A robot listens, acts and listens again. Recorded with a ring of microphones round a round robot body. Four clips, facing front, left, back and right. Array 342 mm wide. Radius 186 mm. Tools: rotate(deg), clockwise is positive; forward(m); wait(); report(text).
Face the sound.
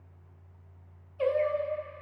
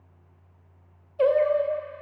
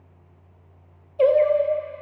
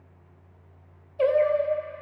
rotate(-155)
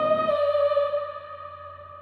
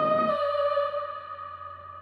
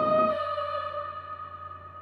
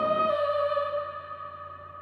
rotate(-25)
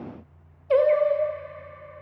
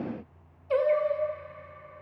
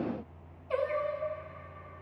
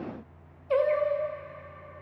report("Found it: singing, straight ahead.")